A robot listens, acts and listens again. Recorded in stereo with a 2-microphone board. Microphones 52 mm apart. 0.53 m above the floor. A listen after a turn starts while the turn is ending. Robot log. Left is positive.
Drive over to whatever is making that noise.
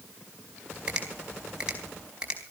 note: The finger snap: about 20° right or 160° right.
cmd yaw -20
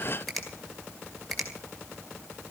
cmd fwd 1.0
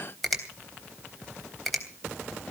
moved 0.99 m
cmd fwd 1.0
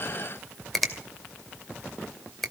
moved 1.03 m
cmd fwd 1.0
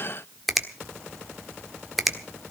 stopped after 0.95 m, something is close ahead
end: Arrived at the finger snap, straight ahead.